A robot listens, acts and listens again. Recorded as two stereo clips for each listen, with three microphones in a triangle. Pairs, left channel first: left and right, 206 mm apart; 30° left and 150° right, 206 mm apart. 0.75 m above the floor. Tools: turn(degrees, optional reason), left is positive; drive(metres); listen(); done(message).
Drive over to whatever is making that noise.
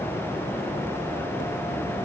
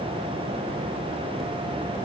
listen()
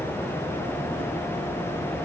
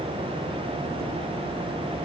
listen()
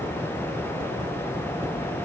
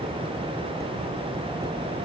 done("I can't make out anything.")